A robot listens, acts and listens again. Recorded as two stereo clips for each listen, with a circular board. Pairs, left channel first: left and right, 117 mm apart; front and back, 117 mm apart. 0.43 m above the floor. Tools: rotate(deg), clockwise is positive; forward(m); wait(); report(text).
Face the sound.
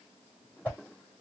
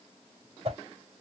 rotate(-165)
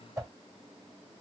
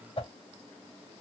rotate(35)
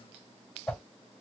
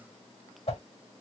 report("Facing the whoosh.")